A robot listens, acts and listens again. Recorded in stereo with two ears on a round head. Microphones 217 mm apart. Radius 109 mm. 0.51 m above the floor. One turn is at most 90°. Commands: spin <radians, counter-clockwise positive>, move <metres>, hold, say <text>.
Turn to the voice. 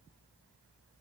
hold
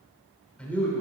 spin 0.52
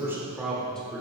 spin 0.52
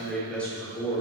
spin 0.35
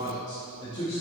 spin 0.44
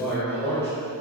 spin 0.52
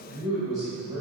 spin -0.26
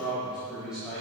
say Facing the man speaking, 2 to 4 m away.